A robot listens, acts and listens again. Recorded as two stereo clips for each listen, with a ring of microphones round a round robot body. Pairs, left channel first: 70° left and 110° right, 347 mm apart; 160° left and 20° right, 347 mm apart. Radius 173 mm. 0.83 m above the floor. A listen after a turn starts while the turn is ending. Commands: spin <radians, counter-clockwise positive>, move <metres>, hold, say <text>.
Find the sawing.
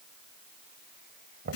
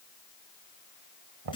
hold
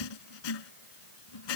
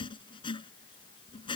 hold
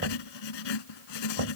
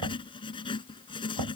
say I can't make out sawing, only knocking and writing.